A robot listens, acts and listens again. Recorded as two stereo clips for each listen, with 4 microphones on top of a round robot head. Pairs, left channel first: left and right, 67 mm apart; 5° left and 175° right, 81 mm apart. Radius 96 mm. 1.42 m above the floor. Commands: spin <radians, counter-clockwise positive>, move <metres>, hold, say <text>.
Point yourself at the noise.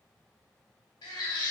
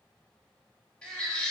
spin 1.48
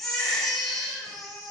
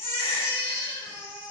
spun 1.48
say Found it: a baby crying, straight ahead, 2 to 4 m away.